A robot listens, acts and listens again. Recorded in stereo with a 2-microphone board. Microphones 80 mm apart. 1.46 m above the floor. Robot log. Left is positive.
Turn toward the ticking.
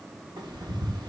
note: The ticking: about 65° right or 115° right.
cmd yaw -65
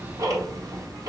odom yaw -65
note: So it is at 45° right.
cmd yaw -45
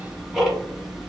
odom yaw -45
end: Found it: ticking, straight ahead.